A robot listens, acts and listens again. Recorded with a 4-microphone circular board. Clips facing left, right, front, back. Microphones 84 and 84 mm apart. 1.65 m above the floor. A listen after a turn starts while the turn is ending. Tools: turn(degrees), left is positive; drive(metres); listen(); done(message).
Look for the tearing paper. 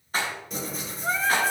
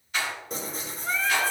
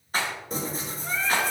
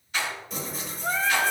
turn(degrees=-45)
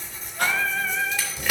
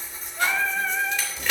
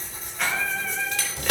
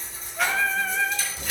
turn(degrees=10)
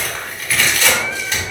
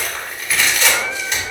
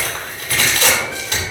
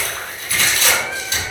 done("Facing the tearing paper.")